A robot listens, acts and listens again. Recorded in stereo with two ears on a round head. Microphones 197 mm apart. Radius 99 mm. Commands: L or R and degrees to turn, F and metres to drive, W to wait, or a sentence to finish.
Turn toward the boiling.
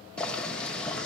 L30
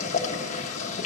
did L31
L145
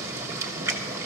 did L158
R15
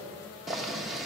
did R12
Found it: boiling, straight ahead.